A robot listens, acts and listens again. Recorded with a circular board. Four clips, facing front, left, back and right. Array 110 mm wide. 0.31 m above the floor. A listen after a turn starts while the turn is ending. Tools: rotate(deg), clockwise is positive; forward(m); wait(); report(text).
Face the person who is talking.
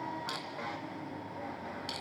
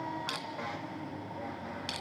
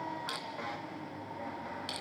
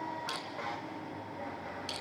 wait()
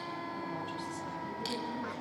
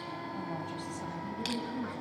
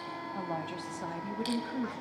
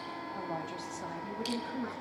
rotate(160)
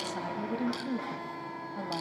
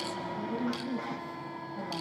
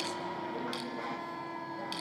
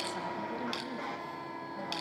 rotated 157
report("Facing the woman speaking.")